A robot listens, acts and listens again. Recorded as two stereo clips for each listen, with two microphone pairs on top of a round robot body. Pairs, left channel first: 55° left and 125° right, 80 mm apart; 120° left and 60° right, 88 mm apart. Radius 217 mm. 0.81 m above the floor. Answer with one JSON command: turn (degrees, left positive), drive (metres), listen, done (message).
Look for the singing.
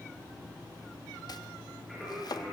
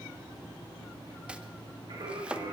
{"turn": -40}
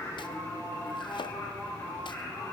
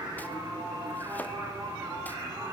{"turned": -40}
{"done": "Facing the singing, over 4 m away."}